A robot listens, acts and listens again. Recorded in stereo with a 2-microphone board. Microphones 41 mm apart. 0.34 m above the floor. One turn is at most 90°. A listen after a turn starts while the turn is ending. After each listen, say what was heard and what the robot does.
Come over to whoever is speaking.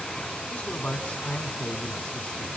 The man speaking: about 35° left or 145° left. Turn 35° left.
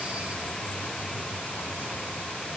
Keep listening.
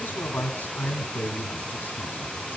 So it is at 105° left. Turn 90° left.
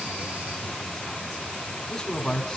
The man speaking is now 15° left. Turn 15° left.
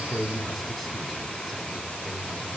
Drive 1.0 m forward.
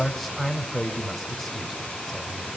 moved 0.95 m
Drive 1.0 m forward.
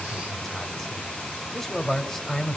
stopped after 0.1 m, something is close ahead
Arrived at the man speaking, straight ahead.